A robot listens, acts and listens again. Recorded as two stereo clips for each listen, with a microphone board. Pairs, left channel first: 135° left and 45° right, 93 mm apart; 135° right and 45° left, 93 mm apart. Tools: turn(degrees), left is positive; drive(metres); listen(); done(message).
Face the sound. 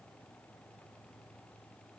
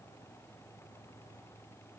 listen()
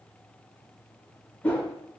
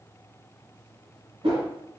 turn(degrees=60)
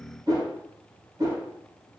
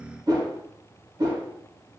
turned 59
done("Facing the whoosh, 1 to 2 m away.")